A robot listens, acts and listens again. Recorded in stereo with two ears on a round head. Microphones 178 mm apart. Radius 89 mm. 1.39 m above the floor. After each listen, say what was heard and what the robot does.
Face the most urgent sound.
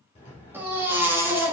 Turn 30° right.
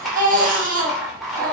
So it is at 135° right. Turn 135° right.
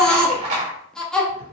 Facing the baby crying.